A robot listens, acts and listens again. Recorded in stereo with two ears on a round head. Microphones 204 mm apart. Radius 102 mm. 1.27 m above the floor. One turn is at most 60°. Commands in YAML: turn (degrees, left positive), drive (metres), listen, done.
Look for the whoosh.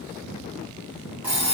listen: true
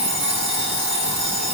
listen: true
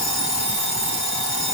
done: "I can't make out a whoosh to turn to."